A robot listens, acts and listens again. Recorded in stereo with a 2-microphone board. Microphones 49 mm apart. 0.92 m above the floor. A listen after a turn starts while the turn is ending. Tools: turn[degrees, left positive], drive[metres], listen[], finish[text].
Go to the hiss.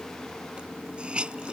Thought: The hiss: about 25° right or 155° right.
Action: turn[-25]
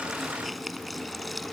Action: drive[1.0]
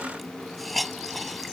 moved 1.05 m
Action: drive[1.0]
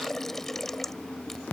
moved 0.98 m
Action: drive[1.0]
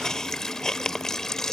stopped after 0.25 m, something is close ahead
Thought: The hiss is now 10° left.
Action: turn[10]
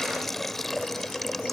Action: finish[Arrived at the hiss, straight ahead.]